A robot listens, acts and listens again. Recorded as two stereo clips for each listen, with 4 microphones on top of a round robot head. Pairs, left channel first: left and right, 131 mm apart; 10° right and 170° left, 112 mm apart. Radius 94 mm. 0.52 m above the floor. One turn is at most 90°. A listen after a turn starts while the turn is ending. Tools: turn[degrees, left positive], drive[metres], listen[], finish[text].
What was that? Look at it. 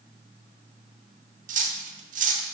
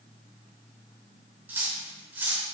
Thought: The cutlery clinking: 115° right.
Action: turn[-90]
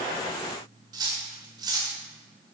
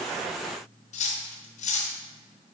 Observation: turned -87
Thought: The cutlery clinking is now 25° right.
Action: turn[-25]
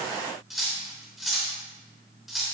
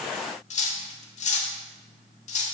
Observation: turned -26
Action: finish[Found it: cutlery clinking, straight ahead, under 1 m away.]